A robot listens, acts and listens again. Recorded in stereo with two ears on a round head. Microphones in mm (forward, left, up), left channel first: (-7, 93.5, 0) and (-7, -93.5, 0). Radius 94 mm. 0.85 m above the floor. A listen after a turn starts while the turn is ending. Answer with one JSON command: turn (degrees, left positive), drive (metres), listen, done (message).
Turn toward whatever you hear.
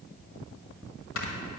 {"turn": 65}
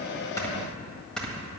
{"done": "Facing the snoring."}